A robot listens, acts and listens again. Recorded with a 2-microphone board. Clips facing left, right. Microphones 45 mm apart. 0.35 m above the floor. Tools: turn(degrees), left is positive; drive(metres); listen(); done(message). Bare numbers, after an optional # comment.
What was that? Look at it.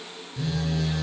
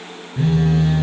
# The phone buzzing: about 35° right or 145° right.
turn(-35)
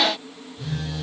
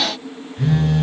# So it is at 110° right.
turn(-110)
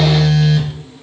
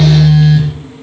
done("Found it: a phone buzzing, straight ahead.")